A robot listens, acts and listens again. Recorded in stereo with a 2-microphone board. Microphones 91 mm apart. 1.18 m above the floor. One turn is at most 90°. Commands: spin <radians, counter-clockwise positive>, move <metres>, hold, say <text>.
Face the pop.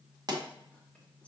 spin -0.87
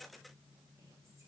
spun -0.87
hold
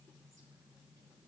say I heard a pop, but can't make it out now. It was about straight ahead or 80° right.